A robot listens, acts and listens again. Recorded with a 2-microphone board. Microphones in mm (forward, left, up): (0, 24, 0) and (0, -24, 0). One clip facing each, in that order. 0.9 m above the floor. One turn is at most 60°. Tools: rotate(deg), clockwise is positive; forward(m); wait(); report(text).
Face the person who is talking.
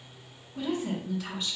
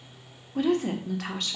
rotate(60)
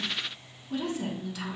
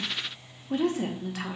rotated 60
rotate(50)
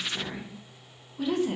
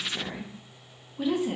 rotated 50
rotate(10)
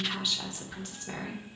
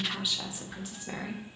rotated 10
rotate(10)
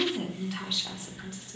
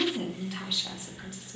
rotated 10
report("Found it: a woman speaking, straight ahead.")